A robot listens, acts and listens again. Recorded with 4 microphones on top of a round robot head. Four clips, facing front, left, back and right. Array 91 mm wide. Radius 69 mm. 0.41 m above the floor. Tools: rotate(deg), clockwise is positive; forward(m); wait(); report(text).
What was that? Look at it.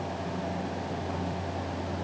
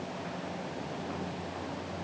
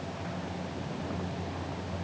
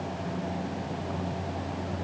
wait()
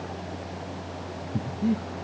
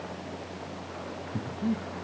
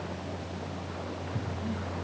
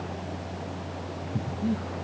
rotate(-10)
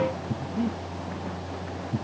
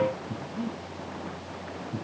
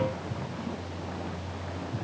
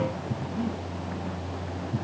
report("Facing the breathing, over 4 m away.")